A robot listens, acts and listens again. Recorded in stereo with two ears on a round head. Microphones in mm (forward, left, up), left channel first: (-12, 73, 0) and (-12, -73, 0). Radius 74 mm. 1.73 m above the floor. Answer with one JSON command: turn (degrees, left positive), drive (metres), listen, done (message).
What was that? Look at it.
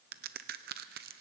{"turn": -65}
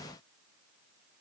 {"listen": true}
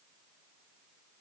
{"done": "I heard a crack, but can't make it out now. It was about straight ahead or 50° right."}